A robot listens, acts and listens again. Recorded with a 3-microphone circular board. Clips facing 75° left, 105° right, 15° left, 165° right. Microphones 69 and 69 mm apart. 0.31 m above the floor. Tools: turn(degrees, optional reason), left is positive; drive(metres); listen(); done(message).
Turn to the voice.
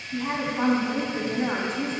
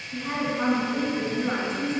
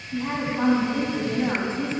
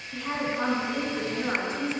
turn(degrees=60, reason="The woman speaking: 60° left.")
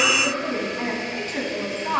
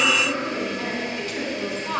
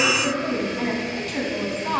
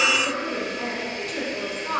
turn(degrees=25, reason="The woman speaking is now 25° left.")
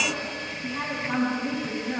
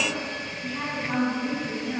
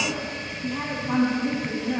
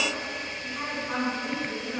done("Facing the woman speaking, 2 to 4 m away.")